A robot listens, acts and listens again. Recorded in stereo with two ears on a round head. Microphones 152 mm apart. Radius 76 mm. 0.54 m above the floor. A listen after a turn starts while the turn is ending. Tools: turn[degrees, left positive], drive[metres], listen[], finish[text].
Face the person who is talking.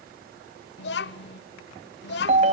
Thought: The child speaking: about 65° left or 115° left.
Action: turn[65]
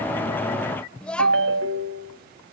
Action: finish[Found it: a child speaking, straight ahead.]